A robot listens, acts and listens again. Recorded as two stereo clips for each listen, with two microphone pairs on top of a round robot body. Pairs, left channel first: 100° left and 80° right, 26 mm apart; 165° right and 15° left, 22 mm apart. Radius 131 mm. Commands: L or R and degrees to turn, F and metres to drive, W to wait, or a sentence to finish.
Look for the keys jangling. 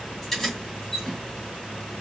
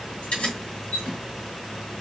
L170
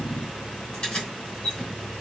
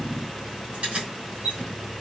L35
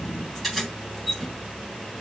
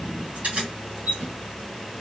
Found it: keys jangling, straight ahead, 2 to 4 m away.